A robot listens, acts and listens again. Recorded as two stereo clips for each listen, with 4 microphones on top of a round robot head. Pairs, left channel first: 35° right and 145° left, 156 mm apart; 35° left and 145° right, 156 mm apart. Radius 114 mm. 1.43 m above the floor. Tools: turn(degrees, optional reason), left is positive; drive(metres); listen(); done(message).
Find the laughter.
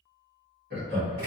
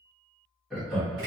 turn(degrees=125, reason="The laughter: 125° left.")
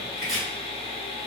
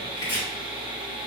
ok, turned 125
listen()
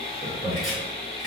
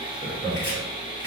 done("Facing the laughter.")